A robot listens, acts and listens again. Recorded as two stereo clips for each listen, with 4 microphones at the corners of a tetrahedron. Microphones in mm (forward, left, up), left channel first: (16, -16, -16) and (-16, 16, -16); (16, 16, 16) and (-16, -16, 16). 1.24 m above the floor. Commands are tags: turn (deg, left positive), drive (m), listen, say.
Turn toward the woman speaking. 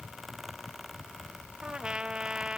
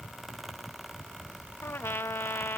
<listen/>
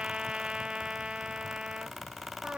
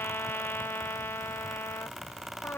<listen/>
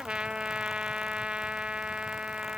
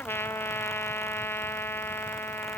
<say>I can't make out a woman speaking, only a trumpet.</say>